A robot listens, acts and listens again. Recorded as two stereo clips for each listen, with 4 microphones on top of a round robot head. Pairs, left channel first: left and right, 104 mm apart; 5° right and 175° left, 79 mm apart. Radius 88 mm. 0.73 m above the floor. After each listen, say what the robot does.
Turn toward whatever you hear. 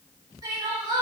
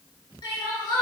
Turn 35° right.
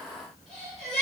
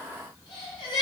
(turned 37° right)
Facing the crying.